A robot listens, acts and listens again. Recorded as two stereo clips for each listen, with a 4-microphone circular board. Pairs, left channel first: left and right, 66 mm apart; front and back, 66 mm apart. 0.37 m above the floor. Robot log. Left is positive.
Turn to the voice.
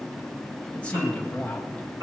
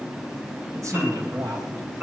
note: The man speaking: 160° left.
cmd yaw +160
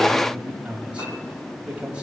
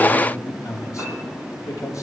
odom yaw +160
note: The man speaking is now 20° right.
cmd yaw -20
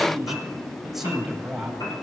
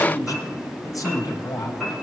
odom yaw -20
end: Facing the man speaking, 2 to 4 m away.